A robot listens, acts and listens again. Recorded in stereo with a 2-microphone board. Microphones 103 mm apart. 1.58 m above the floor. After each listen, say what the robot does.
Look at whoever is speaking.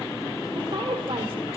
Turn 50° right.
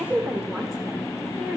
Found it: a woman speaking, straight ahead.